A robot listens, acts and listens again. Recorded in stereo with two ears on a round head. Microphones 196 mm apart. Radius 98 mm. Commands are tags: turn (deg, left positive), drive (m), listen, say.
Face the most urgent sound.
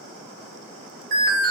<turn deg="-40"/>
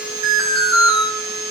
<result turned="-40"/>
<turn deg="-100"/>
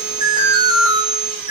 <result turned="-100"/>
<turn deg="-25"/>
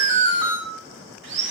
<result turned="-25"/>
<turn deg="-20"/>
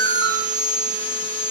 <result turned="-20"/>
<say>Facing the alarm.</say>